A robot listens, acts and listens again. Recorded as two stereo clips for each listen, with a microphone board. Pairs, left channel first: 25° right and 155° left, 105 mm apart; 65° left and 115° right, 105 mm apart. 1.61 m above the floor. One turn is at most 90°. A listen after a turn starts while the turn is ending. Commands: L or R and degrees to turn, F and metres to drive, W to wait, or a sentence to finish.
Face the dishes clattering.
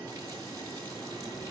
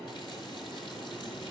W
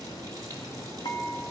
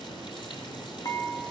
L15
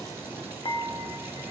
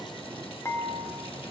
Found it: dishes clattering, straight ahead, 1 to 2 m away.